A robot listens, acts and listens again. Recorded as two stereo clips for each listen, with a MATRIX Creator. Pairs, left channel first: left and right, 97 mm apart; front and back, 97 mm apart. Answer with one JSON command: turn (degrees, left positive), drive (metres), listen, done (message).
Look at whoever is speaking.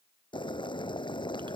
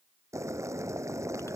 {"listen": true}
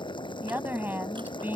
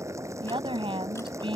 {"turn": -160}
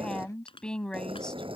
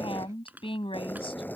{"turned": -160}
{"turn": 10}
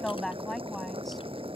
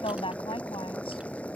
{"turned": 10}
{"done": "Facing the woman speaking."}